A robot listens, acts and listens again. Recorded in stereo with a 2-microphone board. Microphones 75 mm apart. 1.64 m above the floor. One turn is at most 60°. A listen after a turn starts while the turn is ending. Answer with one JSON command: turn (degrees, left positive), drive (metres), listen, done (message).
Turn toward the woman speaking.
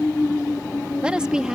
{"turn": -30}
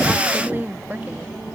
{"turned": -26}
{"turn": -25}
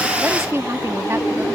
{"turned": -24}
{"turn": -60}
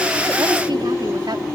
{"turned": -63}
{"turn": -60}
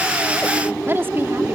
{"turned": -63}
{"turn": -30}
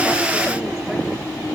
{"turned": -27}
{"listen": true}
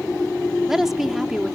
{"done": "Found it: a woman speaking, straight ahead."}